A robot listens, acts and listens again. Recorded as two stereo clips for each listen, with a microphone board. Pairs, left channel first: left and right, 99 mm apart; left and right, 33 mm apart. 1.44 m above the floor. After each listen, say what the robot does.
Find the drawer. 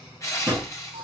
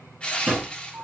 Turn 15° right.
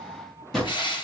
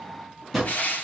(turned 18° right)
Facing the drawer.